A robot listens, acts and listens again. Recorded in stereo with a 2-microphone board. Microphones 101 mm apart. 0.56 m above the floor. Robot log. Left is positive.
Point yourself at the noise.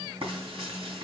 cmd yaw -90
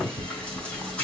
note: So it is at 10° left.
cmd yaw +10
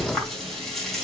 end: Found it: frying, straight ahead.